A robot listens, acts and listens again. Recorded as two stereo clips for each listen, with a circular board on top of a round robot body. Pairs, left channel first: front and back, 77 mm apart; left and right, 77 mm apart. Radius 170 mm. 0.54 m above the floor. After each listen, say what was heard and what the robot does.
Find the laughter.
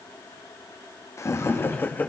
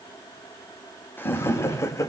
The laughter: 60° left. Turn 60° left.
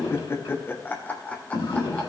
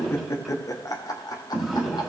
The laughter is now 65° left. Turn 65° left.
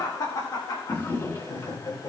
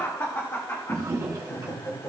The laughter is now 40° left. Turn 40° left.
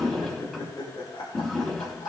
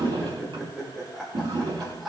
Found it: laughter, straight ahead, 2 to 4 m away.